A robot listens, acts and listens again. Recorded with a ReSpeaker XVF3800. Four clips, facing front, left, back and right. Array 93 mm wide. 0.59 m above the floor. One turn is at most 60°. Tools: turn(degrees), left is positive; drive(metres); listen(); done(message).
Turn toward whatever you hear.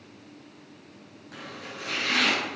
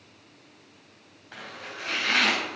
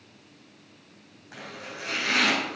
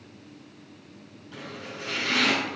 turn(degrees=60)
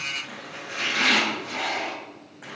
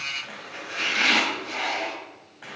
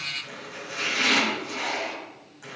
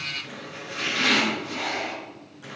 turn(degrees=55)
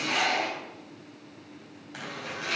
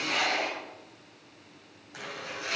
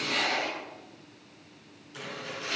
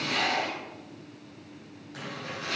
turn(degrees=10)
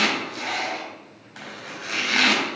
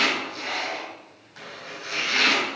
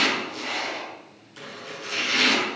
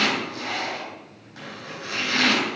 done("Facing the chopping.")